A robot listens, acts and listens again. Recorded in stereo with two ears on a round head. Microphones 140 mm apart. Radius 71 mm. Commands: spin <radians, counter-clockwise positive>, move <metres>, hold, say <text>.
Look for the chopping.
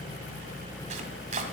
spin -0.87
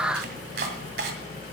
spin -1.31
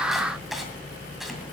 say Facing the chopping, 2 to 4 m away.